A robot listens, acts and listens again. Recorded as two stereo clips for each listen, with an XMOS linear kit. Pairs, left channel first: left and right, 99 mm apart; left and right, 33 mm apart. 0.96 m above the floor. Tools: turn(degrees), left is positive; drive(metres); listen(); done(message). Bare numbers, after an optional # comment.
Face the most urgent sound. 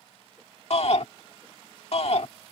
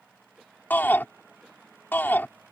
turn(90)
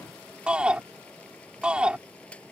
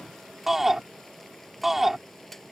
# So it is at 10° right.
turn(-10)
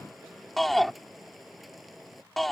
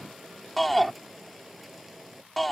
done("Found it: a shout, straight ahead.")